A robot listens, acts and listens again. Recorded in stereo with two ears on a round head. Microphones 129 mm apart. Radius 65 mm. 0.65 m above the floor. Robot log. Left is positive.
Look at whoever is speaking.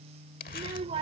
note: The child speaking: about 40° right or 140° right.
cmd yaw -40
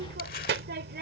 note: So it is at 95° right.
cmd yaw -95
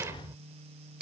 note: The child speaking is now 20° right.
cmd yaw -20
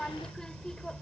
end: Facing the child speaking.